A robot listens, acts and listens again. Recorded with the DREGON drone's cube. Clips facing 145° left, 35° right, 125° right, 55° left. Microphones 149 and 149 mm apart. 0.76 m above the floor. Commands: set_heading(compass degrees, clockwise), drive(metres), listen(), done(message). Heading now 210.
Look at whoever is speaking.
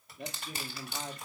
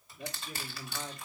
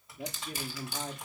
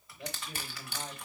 set_heading(5)
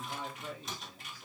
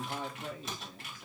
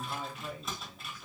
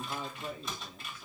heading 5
done("Facing the man speaking.")